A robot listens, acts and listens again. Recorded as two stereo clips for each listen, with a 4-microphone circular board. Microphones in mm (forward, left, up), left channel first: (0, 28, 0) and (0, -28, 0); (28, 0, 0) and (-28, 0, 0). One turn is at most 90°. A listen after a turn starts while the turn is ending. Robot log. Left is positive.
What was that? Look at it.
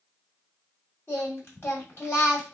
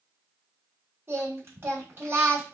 note: The singing: 135° left.
cmd yaw +90
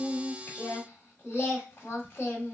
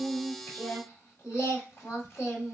note: The singing is now 40° left.
cmd yaw +40
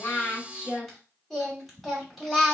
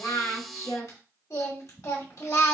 end: Facing the singing, 1 to 2 m away.